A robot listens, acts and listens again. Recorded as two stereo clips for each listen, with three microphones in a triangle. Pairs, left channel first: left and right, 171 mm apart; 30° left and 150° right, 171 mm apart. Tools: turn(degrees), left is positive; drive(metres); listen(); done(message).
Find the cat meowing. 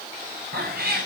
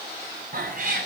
turn(degrees=-115)
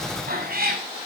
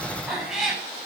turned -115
turn(degrees=-60)
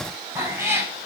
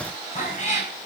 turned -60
turn(degrees=-15)
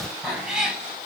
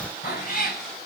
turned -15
done("Found it: a cat meowing, straight ahead.")